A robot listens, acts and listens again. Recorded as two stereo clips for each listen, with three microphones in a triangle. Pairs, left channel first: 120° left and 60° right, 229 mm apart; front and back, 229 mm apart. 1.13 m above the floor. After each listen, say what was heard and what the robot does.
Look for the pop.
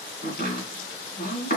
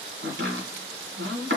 Keep listening.
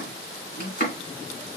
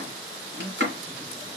Keep listening.
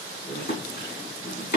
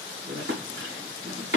I can't make out a pop to turn to.